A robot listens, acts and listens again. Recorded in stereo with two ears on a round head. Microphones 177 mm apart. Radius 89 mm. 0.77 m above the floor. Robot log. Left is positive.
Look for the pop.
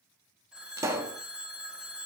note: The pop: about 15° right or 165° right.
cmd yaw -15
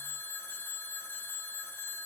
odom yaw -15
cmd idle
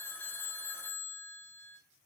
end: I heard a pop, but can't make it out now. It was about straight ahead or 150° right.